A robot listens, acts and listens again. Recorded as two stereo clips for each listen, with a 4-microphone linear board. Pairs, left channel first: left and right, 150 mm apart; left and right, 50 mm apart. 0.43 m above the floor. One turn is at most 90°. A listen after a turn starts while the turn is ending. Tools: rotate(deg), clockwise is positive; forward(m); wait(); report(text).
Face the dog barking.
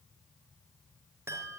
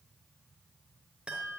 wait()
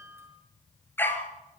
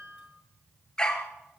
rotate(-30)
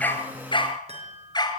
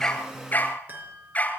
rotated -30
rotate(-90)
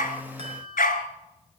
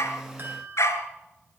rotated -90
rotate(-80)
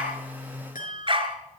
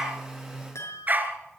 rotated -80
rotate(40)
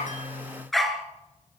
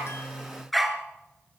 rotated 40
report("Found it: a dog barking, straight ahead, 2 to 4 m away.")